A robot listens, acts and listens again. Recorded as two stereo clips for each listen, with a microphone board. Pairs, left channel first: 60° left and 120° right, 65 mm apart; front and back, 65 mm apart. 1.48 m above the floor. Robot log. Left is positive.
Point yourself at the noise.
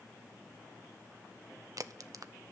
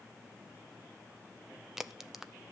note: The crack: 95° right.
cmd yaw -95
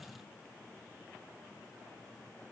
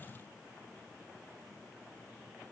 end: I heard a crack from this way, but can't make it out now.